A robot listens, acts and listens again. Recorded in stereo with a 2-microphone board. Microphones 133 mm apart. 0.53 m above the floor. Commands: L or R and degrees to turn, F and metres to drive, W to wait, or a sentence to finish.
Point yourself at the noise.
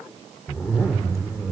L20
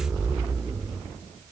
Found it: a zipper, straight ahead, 2 to 4 m away.